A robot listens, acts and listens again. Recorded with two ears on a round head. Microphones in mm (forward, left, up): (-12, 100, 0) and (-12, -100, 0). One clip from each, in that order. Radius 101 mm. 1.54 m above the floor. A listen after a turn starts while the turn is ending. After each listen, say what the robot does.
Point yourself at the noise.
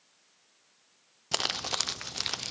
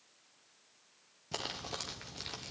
Turn 50° left.
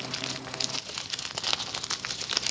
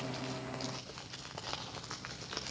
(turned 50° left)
Turn 80° left.
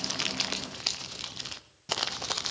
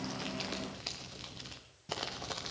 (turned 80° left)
Turn 35° left.
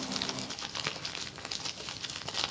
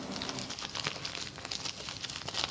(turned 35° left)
Facing the crumpling.